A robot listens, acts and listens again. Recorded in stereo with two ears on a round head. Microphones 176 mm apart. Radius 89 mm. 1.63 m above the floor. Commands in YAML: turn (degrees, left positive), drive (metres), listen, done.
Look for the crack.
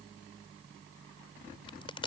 turn: 25
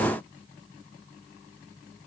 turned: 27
listen: true
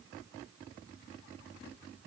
done: "I heard a crack, but can't make it out now. It was about straight ahead or 130° left."